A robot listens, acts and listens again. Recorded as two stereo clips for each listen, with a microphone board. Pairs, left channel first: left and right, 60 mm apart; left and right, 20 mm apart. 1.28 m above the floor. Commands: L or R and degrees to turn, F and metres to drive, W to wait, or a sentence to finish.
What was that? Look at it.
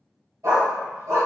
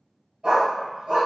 R60
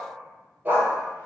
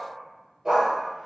R30
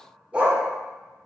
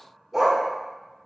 R25
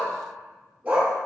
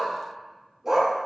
R25
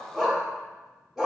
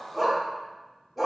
Found it: a dog barking, straight ahead, 1 to 2 m away.